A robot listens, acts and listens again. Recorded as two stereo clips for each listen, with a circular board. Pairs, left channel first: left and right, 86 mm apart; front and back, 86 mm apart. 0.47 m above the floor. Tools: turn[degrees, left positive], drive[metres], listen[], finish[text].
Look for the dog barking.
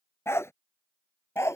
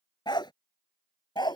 Thought: The dog barking: 35° left.
Action: turn[35]
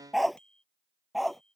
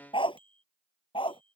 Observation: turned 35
Action: finish[Found it: a dog barking, straight ahead.]